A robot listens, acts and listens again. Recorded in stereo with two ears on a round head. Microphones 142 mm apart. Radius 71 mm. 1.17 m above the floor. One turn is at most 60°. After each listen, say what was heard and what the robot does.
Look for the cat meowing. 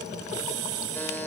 Keep listening.
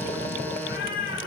The cat meowing: about 70° left or 110° left. Turn 60° left.
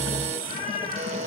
So it is at 50° left. Turn 50° left.
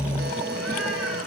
Keep listening.
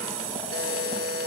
Keep listening.
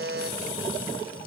Facing where the cat meowing came from. I can't hear it now.